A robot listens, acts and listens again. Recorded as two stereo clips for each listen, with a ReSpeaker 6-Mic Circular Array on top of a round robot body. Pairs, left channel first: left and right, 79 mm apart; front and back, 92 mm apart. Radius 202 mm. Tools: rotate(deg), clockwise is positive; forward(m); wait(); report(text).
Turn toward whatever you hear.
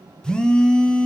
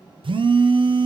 rotate(-170)
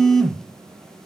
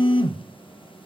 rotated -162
report("Found it: a phone buzzing, straight ahead, 1 to 2 m away.")